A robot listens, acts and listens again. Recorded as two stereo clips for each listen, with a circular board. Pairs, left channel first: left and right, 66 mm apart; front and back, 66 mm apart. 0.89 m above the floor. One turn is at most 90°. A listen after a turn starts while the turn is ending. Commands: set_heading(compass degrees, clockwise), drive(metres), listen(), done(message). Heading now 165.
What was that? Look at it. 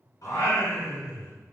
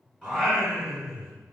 set_heading(95)
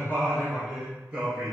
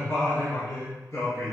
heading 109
set_heading(134)
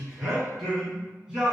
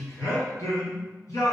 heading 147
set_heading(157)
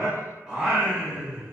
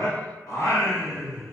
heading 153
set_heading(173)
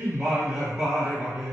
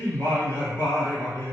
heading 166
set_heading(176)
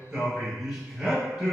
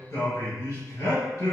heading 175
done("Found it: singing, straight ahead, 2 to 4 m away.")